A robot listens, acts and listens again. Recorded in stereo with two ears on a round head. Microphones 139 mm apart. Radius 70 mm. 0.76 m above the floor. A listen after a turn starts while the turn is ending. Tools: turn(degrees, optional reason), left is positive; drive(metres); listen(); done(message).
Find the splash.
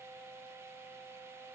listen()
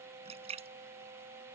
turn(degrees=-40, reason="The splash: about 40° right or 140° right.")
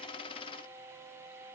listen()
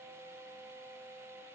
done("I heard a splash, but can't make it out now. It was about straight ahead or 100° right.")